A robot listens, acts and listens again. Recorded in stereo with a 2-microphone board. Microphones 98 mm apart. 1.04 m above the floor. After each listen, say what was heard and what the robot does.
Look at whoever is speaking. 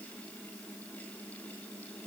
Keep listening.
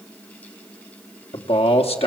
Turn 90° left.
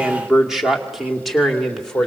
Facing the man speaking, 2 to 4 m away.